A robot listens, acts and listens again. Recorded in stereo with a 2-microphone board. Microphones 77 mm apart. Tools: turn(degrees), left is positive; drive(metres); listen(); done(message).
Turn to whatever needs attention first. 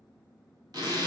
listen()
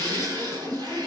listen()
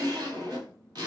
done("I can't make out anything urgent to turn to.")